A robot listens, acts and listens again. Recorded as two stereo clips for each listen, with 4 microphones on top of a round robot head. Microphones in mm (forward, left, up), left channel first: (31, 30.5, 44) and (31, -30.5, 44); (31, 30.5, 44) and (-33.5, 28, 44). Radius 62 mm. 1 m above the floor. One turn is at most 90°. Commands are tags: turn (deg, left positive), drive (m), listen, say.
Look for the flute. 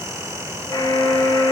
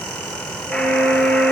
<turn deg="-90"/>
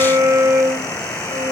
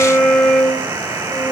<turn deg="-80"/>
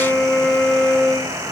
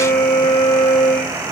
<say>Facing the flute.</say>